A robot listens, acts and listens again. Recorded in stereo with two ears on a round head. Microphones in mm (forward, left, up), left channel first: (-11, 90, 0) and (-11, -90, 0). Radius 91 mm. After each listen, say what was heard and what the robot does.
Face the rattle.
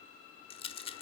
The rattle: about 30° left or 150° left. Turn 30° left.
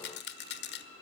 So it is at 120° left. Turn 120° left.
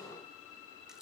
Keep listening.
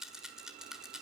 Facing the rattle, 1 to 2 m away.